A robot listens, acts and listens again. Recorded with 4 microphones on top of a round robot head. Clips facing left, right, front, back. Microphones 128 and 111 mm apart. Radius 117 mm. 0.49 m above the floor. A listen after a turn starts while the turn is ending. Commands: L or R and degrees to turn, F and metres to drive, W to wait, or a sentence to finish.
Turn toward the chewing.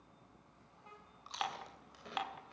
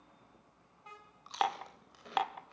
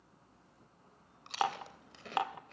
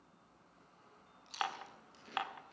Found it: chewing, straight ahead, 2 to 4 m away.